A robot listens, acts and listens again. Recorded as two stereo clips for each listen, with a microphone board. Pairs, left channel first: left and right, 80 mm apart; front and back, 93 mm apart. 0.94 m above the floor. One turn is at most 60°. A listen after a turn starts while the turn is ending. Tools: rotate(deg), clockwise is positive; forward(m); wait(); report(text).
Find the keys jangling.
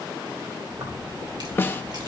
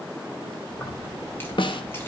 rotate(60)
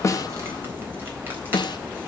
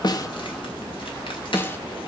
rotate(25)
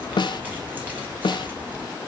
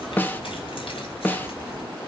rotate(20)
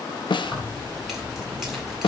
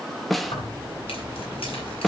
report("Found it: keys jangling, straight ahead, 2 to 4 m away.")